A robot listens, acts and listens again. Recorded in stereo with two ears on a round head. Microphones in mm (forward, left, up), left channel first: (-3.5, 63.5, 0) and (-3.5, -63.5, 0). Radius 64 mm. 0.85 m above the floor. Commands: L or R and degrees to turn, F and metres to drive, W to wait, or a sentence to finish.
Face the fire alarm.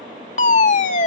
L55
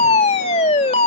L55
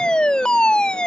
Found it: a fire alarm, straight ahead.